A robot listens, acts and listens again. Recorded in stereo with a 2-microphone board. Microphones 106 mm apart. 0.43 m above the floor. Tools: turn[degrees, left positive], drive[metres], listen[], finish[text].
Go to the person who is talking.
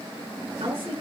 Thought: The woman speaking: about 60° right or 120° right.
Action: turn[-60]
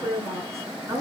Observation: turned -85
Thought: So it is at 30° right.
Action: turn[-30]
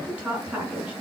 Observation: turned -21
Thought: The woman speaking is now 10° right.
Action: turn[-10]
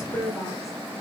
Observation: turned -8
Action: drive[1.0]
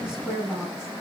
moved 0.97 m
Thought: The woman speaking is now 10° right.
Action: turn[-10]
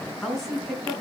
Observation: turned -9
Action: drive[1.0]
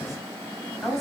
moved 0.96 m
Action: drive[1.0]
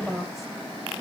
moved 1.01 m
Action: drive[1.0]
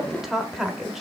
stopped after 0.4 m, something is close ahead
Action: finish[Arrived at the woman speaking, straight ahead.]